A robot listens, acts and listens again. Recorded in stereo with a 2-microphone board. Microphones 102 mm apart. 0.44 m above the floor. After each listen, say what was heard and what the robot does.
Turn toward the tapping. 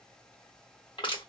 Keep listening.
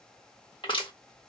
Keep listening.
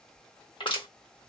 I can't make out tapping to turn to.